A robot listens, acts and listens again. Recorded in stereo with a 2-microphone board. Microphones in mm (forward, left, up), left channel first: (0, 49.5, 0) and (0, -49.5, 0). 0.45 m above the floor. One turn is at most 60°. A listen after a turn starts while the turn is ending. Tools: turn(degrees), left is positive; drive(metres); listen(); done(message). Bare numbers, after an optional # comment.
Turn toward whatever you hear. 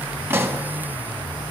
# The pop: about 25° right or 155° right.
turn(-25)
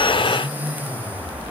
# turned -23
listen()
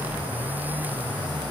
done("I heard a pop, but can't make it out now. It was about straight ahead or 130° right.")